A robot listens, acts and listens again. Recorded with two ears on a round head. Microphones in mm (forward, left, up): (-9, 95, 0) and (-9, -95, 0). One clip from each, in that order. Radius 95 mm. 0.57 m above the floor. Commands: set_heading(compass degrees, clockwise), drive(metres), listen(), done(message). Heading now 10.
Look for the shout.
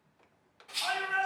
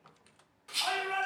set_heading(70)
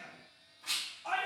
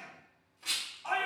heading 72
set_heading(102)
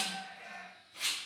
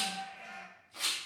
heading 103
done("Found it: a shout, straight ahead, 1 to 2 m away.")